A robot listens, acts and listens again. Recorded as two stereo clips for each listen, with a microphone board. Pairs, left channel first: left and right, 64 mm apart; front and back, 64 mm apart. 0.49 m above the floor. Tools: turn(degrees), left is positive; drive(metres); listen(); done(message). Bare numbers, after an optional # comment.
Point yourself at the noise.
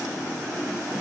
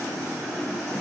listen()
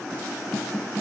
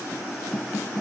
listen()
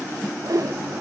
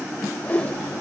# The whoosh: 70° right.
turn(-70)
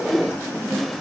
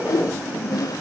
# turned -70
done("Found it: a whoosh, straight ahead, under 1 m away.")